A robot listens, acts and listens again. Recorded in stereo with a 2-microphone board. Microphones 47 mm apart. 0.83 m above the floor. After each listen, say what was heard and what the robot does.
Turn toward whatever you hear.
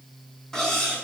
Turn 30° left.
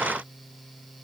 Keep listening.
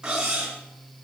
So it is at 15° right. Turn 15° right.
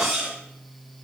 Facing the cutlery clinking.